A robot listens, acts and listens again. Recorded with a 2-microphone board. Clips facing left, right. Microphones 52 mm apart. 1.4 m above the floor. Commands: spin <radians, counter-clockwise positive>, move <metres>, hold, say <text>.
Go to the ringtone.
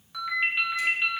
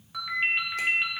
spin -0.52
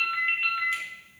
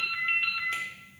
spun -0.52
spin 0.35
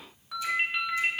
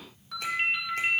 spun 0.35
move 1.0
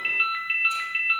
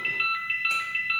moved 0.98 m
spin 0.26
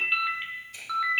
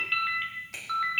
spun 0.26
move 1.0
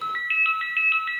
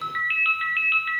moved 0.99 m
move 1.0
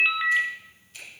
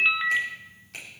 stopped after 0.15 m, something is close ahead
say Arrived at the ringtone, straight ahead.